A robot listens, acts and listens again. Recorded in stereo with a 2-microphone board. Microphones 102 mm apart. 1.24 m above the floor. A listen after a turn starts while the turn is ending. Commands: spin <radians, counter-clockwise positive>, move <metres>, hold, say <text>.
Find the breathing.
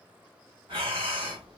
spin -1.05
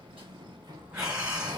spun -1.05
spin -0.17
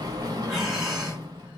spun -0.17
say Found it: breathing, straight ahead, 1 to 2 m away.